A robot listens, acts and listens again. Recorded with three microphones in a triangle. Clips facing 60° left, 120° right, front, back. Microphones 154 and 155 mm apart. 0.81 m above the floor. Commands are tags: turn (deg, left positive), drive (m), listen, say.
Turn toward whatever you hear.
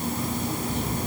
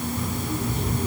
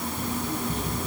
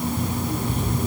<turn deg="140"/>
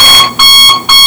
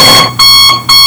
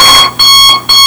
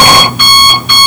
<turn deg="-20"/>
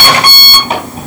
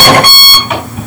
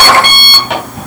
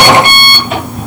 <say>Found it: an alarm clock, straight ahead, over 4 m away.</say>